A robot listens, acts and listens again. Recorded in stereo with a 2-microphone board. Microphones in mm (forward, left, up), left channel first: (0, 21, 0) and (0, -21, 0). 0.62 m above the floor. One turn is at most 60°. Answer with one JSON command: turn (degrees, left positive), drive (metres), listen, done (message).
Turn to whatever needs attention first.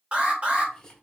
{"turn": -30}
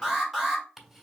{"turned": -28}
{"done": "Found it: an alarm, straight ahead."}